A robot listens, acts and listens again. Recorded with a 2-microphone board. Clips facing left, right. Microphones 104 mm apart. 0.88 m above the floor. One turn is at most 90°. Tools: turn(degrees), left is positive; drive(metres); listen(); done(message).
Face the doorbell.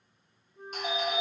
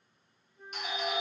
turn(degrees=40)
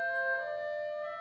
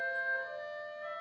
turn(degrees=90)
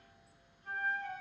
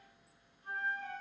listen()
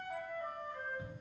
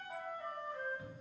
turn(degrees=20)
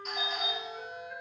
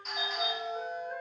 done("Facing the doorbell, 1 to 2 m away.")